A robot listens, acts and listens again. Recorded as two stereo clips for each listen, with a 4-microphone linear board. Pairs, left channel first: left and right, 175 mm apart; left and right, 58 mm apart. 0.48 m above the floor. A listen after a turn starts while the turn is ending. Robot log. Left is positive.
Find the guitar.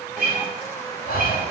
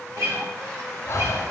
note: The guitar: about 60° right or 120° right.
cmd yaw -60
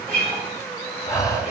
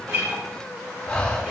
cmd idle
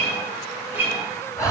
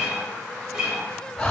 note: So it is at 15° right.
cmd yaw -15
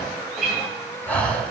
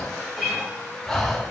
end: Found it: a guitar, straight ahead.